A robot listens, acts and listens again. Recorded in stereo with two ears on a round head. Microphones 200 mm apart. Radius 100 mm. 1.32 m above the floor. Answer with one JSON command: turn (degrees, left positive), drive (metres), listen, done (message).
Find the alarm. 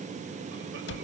{"listen": true}
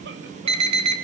{"turn": -25}
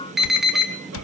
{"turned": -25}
{"done": "Found it: an alarm, straight ahead, 2 to 4 m away."}